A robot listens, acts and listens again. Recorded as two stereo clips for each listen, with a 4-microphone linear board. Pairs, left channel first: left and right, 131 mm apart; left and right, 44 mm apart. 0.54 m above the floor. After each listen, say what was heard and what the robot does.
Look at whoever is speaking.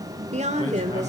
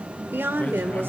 The woman speaking: about 60° right or 120° right. Turn 60° right.
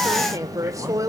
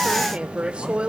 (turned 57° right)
So it is at 30° right. Turn 30° right.
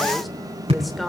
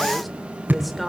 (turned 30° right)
Found it: a woman speaking, straight ahead.